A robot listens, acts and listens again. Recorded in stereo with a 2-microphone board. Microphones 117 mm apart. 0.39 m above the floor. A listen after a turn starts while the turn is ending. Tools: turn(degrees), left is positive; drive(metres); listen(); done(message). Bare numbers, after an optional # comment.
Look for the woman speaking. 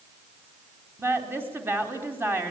# The woman speaking: about 20° right or 160° right.
turn(-20)
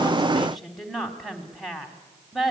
done("Facing the woman speaking, 2 to 4 m away.")